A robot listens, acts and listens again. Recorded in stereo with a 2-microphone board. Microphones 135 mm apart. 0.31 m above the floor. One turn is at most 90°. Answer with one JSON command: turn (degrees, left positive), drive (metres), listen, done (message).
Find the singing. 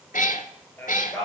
{"turn": 30}
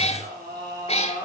{"turn": -30}
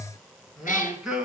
{"done": "Found it: singing, straight ahead, 2 to 4 m away."}